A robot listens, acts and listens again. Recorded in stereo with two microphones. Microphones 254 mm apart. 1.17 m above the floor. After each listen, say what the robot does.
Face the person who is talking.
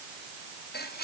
Keep listening.
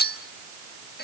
Keep listening.
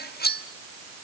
I can't make out anyone speaking to turn to.